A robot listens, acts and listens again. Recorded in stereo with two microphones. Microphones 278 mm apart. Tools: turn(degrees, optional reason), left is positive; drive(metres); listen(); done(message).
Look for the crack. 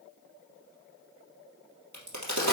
turn(degrees=-70, reason="The crack: about 70° right or 110° right.")
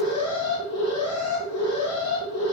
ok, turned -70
listen()
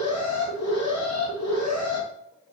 done("I heard a crack, but can't make it out now. It was about straight ahead or 40° right.")